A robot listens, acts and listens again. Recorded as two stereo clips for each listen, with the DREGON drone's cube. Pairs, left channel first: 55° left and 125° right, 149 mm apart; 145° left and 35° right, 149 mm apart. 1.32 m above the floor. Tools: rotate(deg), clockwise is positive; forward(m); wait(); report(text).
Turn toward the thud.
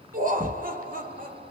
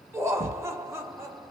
rotate(-95)
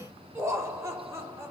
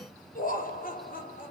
report("Facing where the thud came from. I can't hear it now.")